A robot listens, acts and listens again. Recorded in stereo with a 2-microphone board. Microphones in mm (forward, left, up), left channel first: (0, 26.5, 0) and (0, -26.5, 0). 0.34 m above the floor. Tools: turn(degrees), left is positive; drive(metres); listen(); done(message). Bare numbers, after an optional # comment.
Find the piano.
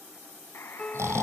# The piano: about 15° left or 165° left.
turn(15)
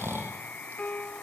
# So it is at 150° left.
turn(150)
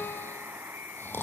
listen()
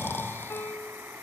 # The piano is now 55° left.
turn(55)
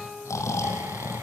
done("Found it: a piano, straight ahead.")